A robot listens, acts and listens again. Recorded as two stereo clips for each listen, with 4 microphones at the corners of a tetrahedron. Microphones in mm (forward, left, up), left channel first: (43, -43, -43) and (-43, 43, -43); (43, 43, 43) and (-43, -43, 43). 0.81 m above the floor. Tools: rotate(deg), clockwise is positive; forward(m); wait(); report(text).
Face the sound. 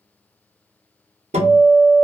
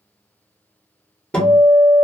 rotate(-125)
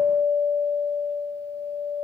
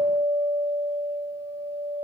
rotate(15)
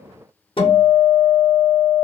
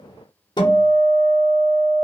report("Facing the guitar.")